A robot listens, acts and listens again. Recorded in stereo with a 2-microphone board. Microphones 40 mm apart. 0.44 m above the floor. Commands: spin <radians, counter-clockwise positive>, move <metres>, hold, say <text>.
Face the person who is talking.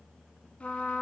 hold
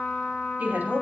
spin -0.87
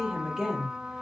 spin -0.17
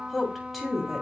say Facing the woman speaking.